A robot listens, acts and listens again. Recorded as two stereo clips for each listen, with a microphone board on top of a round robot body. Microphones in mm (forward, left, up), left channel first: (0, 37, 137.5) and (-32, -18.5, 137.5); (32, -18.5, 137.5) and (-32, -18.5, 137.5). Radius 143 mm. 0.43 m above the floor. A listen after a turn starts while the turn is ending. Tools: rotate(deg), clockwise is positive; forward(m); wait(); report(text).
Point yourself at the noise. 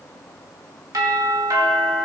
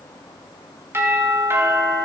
rotate(135)
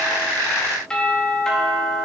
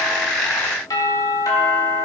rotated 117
rotate(20)
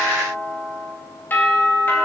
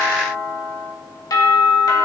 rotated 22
report("Found it: a doorbell, straight ahead, 2 to 4 m away.")